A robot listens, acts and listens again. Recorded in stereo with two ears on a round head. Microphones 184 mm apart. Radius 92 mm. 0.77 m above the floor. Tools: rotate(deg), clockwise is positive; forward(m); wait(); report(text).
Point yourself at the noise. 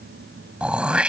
rotate(30)
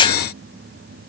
rotate(-25)
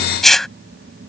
report("Found it: throat clearing, straight ahead.")